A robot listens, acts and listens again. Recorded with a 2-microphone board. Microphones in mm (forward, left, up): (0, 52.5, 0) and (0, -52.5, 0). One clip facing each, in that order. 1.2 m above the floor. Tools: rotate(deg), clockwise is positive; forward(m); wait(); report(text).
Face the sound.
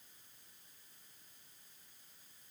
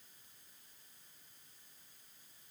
wait()
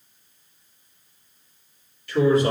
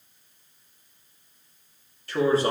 rotate(35)
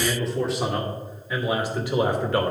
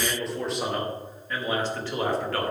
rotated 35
rotate(-20)
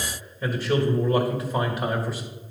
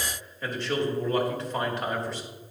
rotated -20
report("Found it: a man speaking, straight ahead.")